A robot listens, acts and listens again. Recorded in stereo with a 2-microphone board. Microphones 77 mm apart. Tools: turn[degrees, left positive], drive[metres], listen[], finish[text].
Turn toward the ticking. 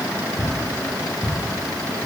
Thought: The ticking: about 30° left or 150° left.
Action: turn[30]
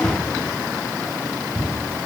Action: finish[Facing the ticking.]